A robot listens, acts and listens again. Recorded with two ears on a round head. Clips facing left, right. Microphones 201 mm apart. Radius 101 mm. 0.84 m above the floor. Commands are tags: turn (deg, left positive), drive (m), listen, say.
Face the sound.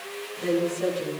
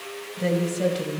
<turn deg="-70"/>
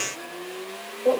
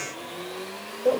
<turn deg="-10"/>
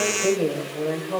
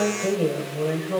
<turn deg="-10"/>
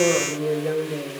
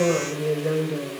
<turn deg="-10"/>
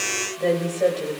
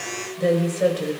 <turn deg="-15"/>
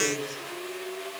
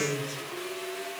<turn deg="-10"/>
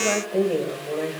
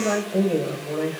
<say>Facing the woman speaking.</say>